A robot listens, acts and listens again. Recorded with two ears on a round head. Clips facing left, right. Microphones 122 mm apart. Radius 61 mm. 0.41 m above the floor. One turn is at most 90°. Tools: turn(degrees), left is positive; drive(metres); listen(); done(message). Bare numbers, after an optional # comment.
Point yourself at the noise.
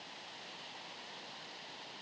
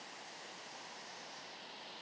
listen()
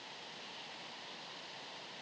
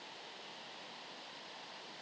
listen()
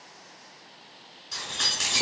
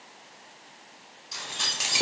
# The keys jangling: about 20° right or 160° right.
turn(-20)
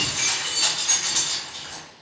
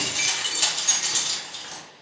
# So it is at 120° right.
turn(-90)
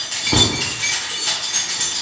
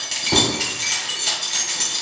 # The keys jangling is now 30° right.
turn(-30)
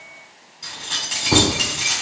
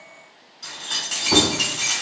done("Found it: keys jangling, straight ahead, 1 to 2 m away.")